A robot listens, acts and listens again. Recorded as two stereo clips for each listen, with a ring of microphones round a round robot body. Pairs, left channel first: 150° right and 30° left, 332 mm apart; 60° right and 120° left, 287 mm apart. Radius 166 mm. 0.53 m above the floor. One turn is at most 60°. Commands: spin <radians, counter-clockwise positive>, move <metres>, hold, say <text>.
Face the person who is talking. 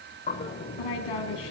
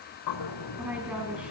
spin -1.05
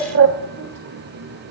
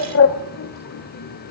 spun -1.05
spin -1.05
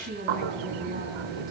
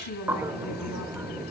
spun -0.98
spin -0.61
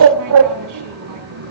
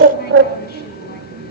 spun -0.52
hold
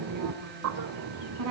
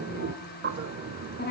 say Found it: a woman speaking, straight ahead, over 4 m away.